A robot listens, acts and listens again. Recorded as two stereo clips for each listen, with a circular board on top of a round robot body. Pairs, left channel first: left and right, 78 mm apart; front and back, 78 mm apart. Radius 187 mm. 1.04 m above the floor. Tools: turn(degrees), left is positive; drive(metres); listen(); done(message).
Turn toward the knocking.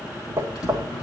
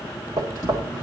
turn(degrees=-145)
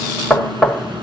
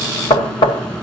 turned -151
done("Facing the knocking.")